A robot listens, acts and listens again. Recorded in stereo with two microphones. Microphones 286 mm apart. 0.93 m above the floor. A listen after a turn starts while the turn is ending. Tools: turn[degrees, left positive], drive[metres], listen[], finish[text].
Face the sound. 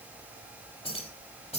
Thought: The keys jangling: about 20° left or 160° left.
Action: turn[20]
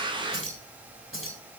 Thought: So it is at 135° left.
Action: turn[135]
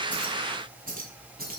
Thought: The keys jangling is now 30° right.
Action: turn[-30]
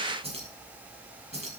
Thought: The keys jangling is now 25° right.
Action: turn[-25]
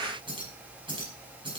Thought: The keys jangling is now 15° right.
Action: turn[-15]
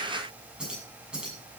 Action: finish[Found it: keys jangling, straight ahead, over 4 m away.]